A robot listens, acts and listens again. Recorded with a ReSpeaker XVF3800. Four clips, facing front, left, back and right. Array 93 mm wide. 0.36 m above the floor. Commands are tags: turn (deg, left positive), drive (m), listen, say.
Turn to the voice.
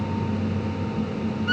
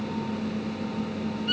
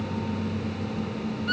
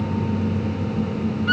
<listen/>
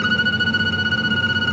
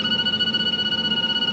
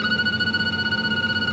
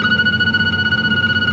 <listen/>
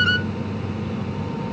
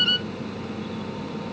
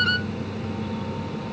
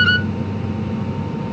<say>I can't make out anyone speaking, only a violin.</say>